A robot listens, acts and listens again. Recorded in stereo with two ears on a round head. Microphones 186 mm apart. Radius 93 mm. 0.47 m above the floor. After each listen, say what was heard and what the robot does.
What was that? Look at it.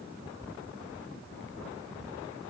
Keep listening.
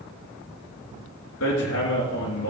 Turn 90° left.
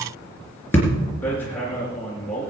So it is at 10° left. Turn 10° left.
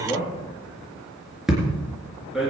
Found it: hammering, straight ahead.